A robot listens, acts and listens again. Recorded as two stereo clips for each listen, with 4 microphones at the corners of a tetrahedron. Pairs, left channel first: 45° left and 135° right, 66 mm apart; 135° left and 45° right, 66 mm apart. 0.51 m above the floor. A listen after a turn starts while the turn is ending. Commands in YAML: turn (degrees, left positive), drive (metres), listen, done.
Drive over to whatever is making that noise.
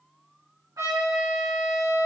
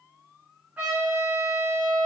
turn: -115
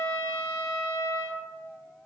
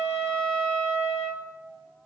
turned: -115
drive: 1.0
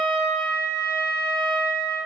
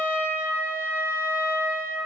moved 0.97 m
turn: 10
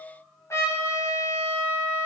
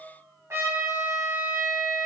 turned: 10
drive: 1.0
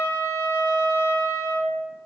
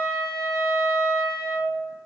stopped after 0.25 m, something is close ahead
done: "Arrived at the trumpet, straight ahead."